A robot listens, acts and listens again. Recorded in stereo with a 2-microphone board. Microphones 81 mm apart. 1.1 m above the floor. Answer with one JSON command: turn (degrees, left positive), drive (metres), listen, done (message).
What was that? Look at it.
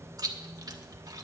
{"turn": -50}
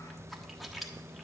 {"done": "Facing the chewing."}